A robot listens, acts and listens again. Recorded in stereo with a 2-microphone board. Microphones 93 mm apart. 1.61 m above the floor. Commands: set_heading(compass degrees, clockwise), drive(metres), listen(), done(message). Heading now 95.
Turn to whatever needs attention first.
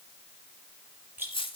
listen()
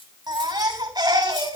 set_heading(140)
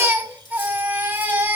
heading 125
set_heading(145)
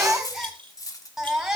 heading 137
done("Found it: a baby crying, straight ahead.")